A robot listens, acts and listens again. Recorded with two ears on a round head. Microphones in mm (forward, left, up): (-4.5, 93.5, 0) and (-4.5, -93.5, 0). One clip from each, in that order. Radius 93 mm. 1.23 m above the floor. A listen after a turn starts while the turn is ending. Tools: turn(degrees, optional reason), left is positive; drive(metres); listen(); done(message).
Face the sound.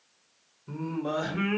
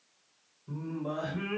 turn(degrees=45, reason="The singing: about 45° left or 135° left.")
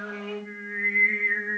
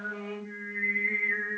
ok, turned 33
done("Found it: singing, straight ahead, 1 to 2 m away.")